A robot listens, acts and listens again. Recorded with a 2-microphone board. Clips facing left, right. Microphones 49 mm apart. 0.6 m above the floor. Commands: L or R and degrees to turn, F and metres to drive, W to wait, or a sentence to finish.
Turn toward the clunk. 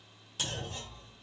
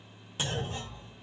R20
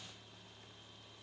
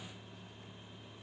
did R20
W
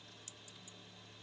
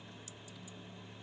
I heard a clunk, but can't make it out now. It was about straight ahead or 140° right.